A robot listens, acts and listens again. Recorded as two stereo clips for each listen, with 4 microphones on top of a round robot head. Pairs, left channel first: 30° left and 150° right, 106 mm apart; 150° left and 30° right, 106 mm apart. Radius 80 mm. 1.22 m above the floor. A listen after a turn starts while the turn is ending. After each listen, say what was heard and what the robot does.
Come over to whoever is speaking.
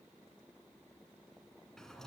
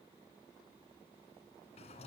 Keep listening.
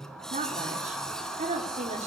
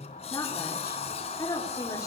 The woman speaking: 150° right. Turn 150° right.
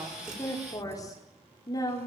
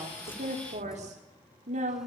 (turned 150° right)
The woman speaking is now 25° right. Turn 25° right.
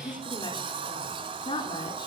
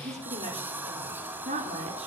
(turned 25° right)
The woman speaking is now 15° right. Turn 15° right.
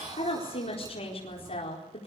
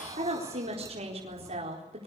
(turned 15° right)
Drive 1.0 m forward.
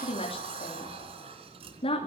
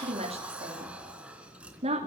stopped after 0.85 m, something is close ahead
Something is in my way. I am facing the woman speaking but have not reached it.